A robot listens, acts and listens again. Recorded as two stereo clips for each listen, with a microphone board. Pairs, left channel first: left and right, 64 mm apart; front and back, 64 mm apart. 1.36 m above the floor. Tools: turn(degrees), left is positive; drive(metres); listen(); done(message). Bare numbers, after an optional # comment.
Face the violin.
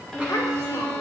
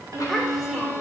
# The violin: 170° left.
turn(170)
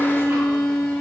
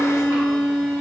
# The violin is now 45° left.
turn(45)
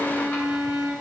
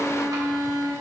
# The violin is now 15° right.
turn(-15)
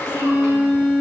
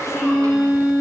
done("Found it: a violin, straight ahead.")